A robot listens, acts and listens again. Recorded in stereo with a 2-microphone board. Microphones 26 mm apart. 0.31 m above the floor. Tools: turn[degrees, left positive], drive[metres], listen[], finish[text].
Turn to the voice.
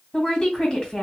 Thought: The woman speaking: about 25° left or 155° left.
Action: turn[25]
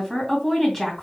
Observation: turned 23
Thought: So it is at 10° left.
Action: turn[10]
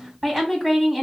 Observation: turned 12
Action: finish[Facing the woman speaking.]